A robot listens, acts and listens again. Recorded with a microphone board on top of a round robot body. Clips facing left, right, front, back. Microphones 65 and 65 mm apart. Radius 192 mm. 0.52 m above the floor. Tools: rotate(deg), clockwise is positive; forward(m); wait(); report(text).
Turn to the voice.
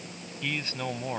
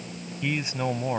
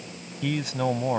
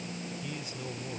rotate(20)
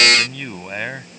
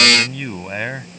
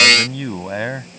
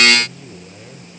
rotate(10)
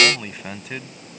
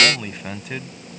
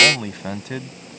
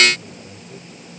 report("Facing the man speaking.")